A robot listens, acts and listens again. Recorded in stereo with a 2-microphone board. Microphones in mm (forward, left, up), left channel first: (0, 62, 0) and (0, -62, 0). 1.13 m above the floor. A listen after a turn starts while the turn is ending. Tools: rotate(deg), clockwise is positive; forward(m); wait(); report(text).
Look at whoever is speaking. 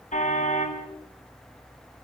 wait()
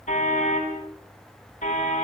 wait()
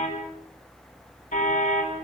report("I can't make out anyone speaking, only a car horn.")